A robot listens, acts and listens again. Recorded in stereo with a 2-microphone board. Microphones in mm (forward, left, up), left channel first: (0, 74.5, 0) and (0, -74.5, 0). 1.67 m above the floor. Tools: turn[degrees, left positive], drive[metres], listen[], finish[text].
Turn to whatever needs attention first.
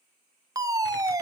Thought: The fire alarm: about 25° right or 155° right.
Action: turn[-25]
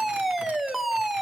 Action: finish[Facing the fire alarm, 1 to 2 m away.]